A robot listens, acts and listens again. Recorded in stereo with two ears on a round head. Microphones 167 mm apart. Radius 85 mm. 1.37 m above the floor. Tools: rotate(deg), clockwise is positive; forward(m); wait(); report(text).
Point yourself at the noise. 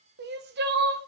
rotate(55)
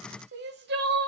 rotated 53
rotate(60)
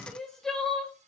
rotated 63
report("Facing the crying.")